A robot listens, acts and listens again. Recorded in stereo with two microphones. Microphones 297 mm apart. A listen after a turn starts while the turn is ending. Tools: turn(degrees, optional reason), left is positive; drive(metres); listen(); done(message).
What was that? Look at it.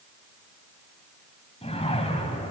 turn(degrees=20, reason="The whoosh: about 20° left or 160° left.")
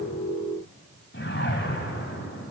turn(degrees=135, reason="So it is at 135° left.")
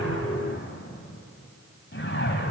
turn(degrees=45, reason="The whoosh is now 45° left.")
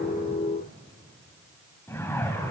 turn(degrees=10, reason="The whoosh is now 10° left.")
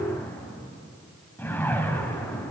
done("Found it: a whoosh, straight ahead.")